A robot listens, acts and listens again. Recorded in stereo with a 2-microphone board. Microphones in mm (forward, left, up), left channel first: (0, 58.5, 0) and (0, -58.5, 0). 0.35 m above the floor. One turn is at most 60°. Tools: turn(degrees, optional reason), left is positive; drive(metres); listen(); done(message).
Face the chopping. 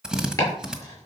turn(degrees=25, reason="The chopping: about 25° left or 155° left.")
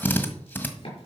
listen()
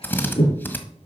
turn(degrees=60, reason="So it is at 130° left.")
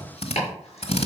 turn(degrees=60, reason="The chopping is now 65° left.")
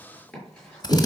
listen()
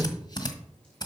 listen()
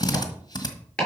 turn(degrees=10, reason="The chopping is now 10° left.")
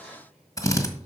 listen()
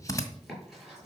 listen()
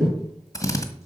done("Found it: chopping, straight ahead.")